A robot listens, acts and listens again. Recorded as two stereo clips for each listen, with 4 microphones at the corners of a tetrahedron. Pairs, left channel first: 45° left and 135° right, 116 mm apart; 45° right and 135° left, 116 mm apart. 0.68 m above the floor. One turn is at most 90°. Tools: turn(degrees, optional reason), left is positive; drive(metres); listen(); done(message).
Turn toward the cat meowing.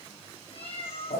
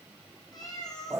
turn(degrees=10, reason="The cat meowing: 10° left.")
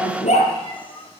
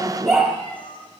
done("Facing the cat meowing.")